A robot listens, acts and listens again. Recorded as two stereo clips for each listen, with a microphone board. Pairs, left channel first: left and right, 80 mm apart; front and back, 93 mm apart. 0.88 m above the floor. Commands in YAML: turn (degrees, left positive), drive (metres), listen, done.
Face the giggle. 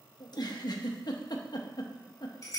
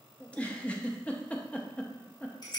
turn: 75
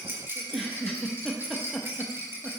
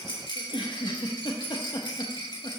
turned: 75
done: "Found it: a giggle, straight ahead, under 1 m away."